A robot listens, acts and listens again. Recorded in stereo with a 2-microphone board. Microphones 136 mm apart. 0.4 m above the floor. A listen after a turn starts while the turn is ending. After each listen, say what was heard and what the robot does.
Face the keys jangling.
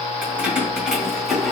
Turn 30° left.
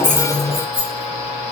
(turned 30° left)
So it is at 145° left. Turn 145° left.
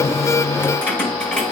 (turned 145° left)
Found it: keys jangling, straight ahead.